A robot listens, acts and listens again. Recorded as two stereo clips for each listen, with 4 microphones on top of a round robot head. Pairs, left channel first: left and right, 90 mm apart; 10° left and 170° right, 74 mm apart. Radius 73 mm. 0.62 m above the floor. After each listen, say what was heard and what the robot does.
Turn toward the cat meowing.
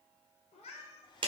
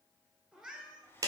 The cat meowing: 120° left. Turn 120° left.
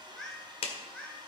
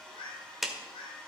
The cat meowing is now 15° left. Turn 15° left.
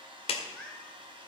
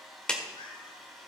The cat meowing is now 10° left. Turn 10° left.
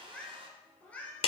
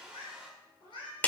The cat meowing is now 20° left. Turn 20° left.
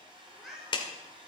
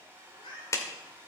Facing the cat meowing, 2 to 4 m away.